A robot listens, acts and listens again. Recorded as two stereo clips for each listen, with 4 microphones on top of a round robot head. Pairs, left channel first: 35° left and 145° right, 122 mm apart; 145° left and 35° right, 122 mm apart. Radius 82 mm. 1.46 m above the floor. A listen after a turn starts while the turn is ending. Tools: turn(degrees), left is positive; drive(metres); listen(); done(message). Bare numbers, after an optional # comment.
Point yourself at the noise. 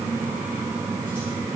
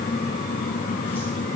listen()
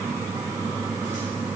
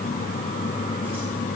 listen()
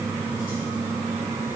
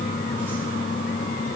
done("I can't make out anything to turn to.")